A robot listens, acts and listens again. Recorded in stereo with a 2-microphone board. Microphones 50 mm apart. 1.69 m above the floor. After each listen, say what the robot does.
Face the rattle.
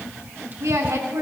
Keep listening.
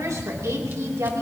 Keep listening.
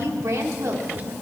I can't make out a rattle to turn to.